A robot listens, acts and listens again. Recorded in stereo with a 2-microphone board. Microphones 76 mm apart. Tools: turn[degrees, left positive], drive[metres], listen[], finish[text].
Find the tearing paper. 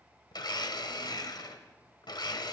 Action: listen[]
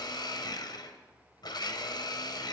Action: listen[]
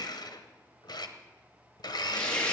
Action: turn[30]
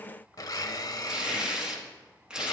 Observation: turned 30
Thought: So it is at 10° right.
Action: turn[-10]
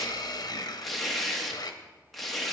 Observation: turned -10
Action: finish[Facing the tearing paper.]